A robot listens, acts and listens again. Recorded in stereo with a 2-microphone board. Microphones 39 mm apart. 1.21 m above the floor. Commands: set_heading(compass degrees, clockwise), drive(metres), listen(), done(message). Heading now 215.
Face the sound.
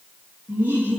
set_heading(280)
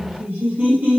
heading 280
set_heading(330)
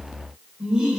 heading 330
set_heading(350)
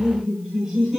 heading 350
done("Found it: laughter, straight ahead, over 4 m away.")